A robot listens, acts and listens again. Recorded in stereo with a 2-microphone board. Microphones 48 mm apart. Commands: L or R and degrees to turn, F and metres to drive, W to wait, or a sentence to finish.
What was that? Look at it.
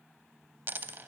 R45
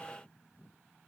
W
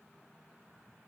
I heard a dropped coin, but can't make it out now. It was about straight ahead or 90° right.